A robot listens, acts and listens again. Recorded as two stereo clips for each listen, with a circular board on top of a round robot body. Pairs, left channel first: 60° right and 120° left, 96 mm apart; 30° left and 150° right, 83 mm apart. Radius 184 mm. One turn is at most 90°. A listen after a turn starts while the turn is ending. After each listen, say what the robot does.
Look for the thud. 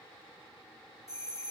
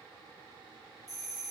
Keep listening.
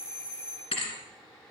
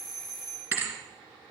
Turn 85° right.
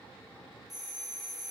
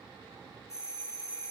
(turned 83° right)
Facing where the thud came from. I can't hear it now.